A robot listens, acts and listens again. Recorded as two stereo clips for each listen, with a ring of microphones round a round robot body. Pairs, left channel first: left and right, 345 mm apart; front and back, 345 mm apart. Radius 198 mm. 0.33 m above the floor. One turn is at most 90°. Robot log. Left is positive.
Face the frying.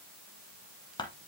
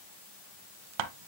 cmd idle
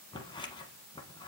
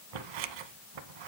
cmd idle
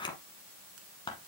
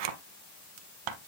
end: I can't make out frying to turn to.